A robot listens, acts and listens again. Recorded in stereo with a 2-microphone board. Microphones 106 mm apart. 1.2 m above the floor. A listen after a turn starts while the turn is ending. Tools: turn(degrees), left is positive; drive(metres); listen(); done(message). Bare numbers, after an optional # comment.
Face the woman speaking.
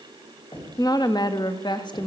# The woman speaking: about 45° left or 135° left.
turn(45)
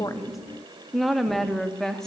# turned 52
done("Found it: a woman speaking, straight ahead, 2 to 4 m away.")